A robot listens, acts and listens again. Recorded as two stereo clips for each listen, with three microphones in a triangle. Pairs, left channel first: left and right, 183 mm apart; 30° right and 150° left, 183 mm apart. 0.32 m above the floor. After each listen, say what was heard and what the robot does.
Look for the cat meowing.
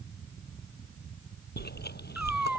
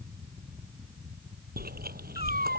Found it: a cat meowing, straight ahead.